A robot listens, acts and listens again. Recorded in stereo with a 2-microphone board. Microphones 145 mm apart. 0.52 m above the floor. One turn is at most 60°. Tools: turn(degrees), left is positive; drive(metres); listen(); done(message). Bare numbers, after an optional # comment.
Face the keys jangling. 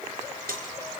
turn(-60)
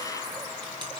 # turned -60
# Nothing new. It was at 30° right.
turn(-30)
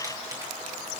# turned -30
listen()
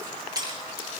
# The keys jangling is now 25° right.
turn(-25)
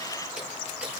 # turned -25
listen()
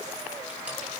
listen()
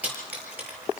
# The keys jangling is now 10° right.
turn(-10)
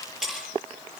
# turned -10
done("Found it: keys jangling, straight ahead.")